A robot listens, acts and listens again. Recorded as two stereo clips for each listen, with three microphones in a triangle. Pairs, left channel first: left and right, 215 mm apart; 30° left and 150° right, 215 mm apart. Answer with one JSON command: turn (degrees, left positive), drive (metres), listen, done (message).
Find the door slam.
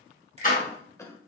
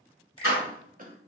{"turn": 40}
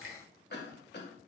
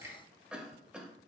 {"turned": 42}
{"done": "I heard a door slam from this way, but can't make it out now."}